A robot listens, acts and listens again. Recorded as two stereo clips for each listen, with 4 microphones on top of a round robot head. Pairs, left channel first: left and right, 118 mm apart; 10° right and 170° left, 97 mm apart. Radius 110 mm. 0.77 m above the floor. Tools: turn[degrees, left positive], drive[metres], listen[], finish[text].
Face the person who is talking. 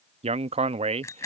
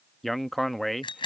Thought: The man speaking: 100° right.
Action: turn[-100]
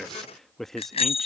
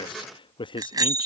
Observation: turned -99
Action: finish[Found it: a man speaking, straight ahead.]